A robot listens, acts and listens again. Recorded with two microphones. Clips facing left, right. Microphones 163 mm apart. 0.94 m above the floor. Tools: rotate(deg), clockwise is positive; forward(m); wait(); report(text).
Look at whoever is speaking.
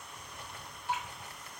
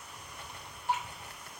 wait()
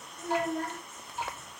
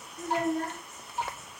rotate(40)
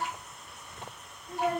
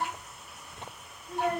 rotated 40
report("Found it: a child speaking, straight ahead, under 1 m away.")